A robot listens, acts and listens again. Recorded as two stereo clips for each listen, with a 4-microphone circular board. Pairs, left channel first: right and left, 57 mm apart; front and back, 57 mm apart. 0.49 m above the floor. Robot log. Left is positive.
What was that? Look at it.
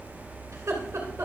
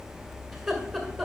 note: The laughter: 85° left.
cmd yaw +85
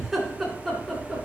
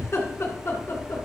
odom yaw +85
note: The laughter is now 10° right.
cmd yaw -10
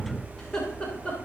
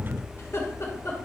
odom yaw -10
note: The laughter is now 20° right.
cmd yaw -20
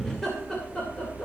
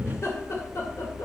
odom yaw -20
note: The laughter is now 15° right.
cmd yaw -15
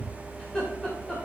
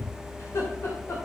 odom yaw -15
note: The laughter is now 15° right.
cmd yaw -15
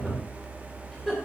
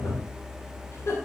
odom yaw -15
end: Facing the laughter, 2 to 4 m away.